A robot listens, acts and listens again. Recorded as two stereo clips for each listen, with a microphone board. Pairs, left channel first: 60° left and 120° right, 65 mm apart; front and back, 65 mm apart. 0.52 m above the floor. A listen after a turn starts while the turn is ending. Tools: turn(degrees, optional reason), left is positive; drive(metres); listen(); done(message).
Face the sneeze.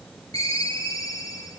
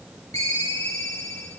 listen()
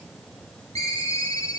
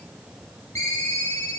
listen()
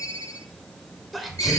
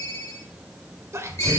turn(degrees=150, reason="The sneeze: 150° left.")
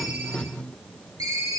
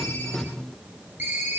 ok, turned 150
done("Facing where the sneeze came from. I can't hear it now.")